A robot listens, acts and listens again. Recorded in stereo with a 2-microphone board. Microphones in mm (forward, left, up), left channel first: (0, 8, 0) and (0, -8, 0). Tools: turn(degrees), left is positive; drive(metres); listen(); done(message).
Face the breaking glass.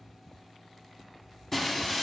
turn(degrees=30)
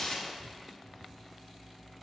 turn(degrees=130)
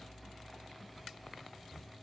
done("Facing where the breaking glass came from. I can't hear it now.")